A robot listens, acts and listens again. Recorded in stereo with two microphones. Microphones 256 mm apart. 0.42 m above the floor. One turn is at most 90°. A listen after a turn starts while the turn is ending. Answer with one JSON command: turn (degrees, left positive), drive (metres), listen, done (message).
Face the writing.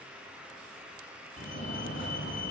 {"listen": true}
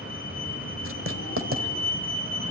{"turn": -55}
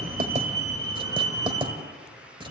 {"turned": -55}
{"turn": -20}
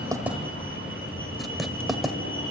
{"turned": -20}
{"done": "Facing the writing, 1 to 2 m away."}